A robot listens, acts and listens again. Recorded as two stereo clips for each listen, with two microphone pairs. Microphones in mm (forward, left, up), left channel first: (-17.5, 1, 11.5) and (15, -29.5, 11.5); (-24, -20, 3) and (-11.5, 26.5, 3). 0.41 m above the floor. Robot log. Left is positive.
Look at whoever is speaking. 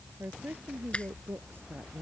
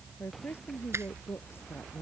note: The woman speaking: 75° right.
cmd yaw -75
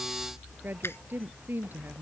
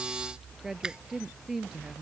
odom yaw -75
end: Facing the woman speaking.